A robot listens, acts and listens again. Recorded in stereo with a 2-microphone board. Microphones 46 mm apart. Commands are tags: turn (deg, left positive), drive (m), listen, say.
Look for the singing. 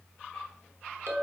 <listen/>
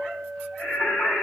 <turn deg="30"/>
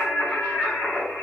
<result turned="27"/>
<turn deg="120"/>
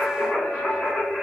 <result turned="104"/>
<turn deg="10"/>
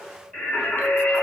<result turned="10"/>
<say>Found it: singing, straight ahead, 2 to 4 m away.</say>